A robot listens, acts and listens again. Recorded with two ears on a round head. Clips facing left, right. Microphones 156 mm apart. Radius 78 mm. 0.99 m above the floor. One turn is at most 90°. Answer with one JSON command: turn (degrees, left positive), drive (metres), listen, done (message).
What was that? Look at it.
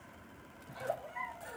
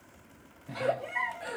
{"turn": -70}
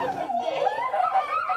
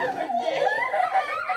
{"turn": -15}
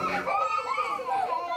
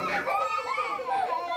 {"done": "Facing the giggle."}